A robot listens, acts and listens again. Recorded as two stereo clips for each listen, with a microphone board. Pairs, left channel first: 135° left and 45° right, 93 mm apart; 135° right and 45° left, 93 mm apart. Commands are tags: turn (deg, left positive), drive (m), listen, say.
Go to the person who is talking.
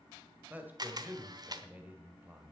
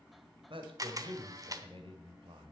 <turn deg="25"/>
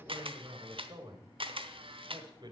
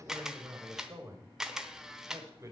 <turn deg="-10"/>
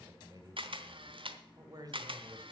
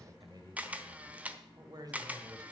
<drive m="1.0"/>
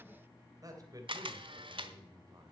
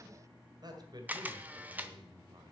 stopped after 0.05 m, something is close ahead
<say>Something is in my way. I am facing the man speaking but have not reached it.</say>